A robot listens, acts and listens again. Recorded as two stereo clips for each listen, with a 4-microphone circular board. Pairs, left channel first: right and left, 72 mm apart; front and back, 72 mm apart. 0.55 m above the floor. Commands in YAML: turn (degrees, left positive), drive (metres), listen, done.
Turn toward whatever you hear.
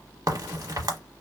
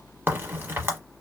turn: 120
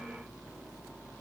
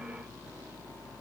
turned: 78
turn: 40
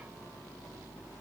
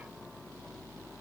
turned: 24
turn: 20
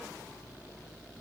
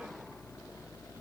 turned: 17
done: "I heard a crack from this way, but can't make it out now."